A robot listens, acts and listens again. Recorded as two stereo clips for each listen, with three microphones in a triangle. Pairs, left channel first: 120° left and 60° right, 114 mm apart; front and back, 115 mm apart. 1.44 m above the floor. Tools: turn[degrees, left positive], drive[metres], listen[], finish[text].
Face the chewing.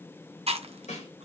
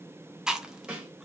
Thought: The chewing: 95° right.
Action: turn[-95]
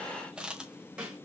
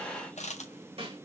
Action: listen[]
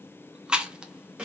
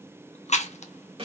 Thought: The chewing is now 25° left.
Action: turn[25]
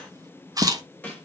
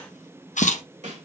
Action: finish[Facing the chewing.]